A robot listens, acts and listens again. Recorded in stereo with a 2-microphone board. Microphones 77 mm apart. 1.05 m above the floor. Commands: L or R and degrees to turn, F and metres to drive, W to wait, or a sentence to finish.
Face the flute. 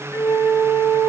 L55
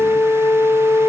L70
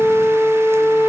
Found it: a flute, straight ahead, 2 to 4 m away.